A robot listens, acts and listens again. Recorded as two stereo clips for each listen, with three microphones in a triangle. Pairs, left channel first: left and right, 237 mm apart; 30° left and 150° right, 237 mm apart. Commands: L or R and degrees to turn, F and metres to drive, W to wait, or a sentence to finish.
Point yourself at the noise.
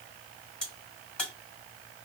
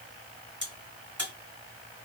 L175
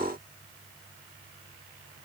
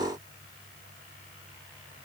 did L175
I heard a crack from this way, but can't make it out now.